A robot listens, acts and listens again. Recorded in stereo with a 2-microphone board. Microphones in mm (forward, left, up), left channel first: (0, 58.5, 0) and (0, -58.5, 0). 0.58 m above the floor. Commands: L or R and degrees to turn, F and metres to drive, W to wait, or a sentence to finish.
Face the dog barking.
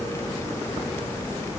W
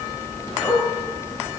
L20
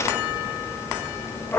L30
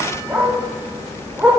R15
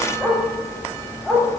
Found it: a dog barking, straight ahead.